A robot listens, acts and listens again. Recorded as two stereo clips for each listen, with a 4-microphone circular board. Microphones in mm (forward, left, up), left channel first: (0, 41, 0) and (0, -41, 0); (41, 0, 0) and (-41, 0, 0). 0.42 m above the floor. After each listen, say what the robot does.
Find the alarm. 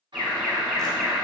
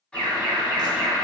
Facing the alarm.